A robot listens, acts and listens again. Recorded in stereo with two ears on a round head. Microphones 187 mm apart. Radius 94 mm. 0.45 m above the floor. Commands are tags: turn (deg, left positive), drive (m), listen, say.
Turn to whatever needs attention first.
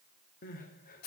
<turn deg="40"/>
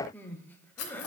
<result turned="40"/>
<turn deg="10"/>
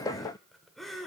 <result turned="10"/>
<say>Found it: crying, straight ahead, under 1 m away.</say>